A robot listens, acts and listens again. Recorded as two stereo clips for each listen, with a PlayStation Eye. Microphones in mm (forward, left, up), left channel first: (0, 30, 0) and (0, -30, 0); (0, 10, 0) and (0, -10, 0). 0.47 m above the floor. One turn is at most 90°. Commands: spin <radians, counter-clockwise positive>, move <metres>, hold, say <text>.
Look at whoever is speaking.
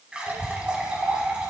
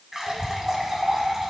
spin -0.52
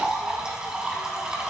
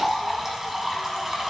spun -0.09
hold
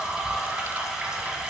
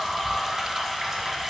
spin -0.61
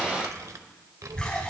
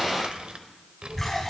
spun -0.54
spin -1.57
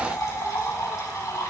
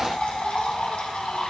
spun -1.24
spin -0.70
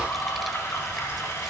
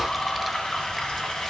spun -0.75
say Facing the child speaking.